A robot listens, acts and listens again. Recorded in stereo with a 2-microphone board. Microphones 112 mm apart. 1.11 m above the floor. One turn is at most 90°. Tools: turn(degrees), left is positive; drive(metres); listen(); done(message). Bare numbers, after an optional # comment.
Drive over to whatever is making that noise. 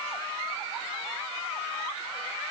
listen()
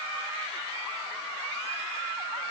listen()
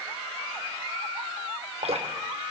# The dripping: about 65° right or 115° right.
turn(-65)
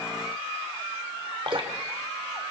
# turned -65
# So it is at 50° right.
turn(-50)
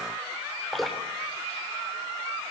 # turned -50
drive(1.0)
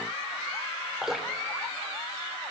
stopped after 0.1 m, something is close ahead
done("Blocked. The dripping is further on, straight ahead.")